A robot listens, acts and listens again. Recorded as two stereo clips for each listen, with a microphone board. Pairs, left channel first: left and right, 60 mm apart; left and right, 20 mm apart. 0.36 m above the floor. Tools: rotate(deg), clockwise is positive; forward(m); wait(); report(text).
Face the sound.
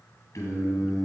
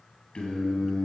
rotate(-65)
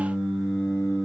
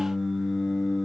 rotate(-10)
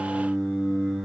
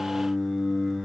report("Facing the singing.")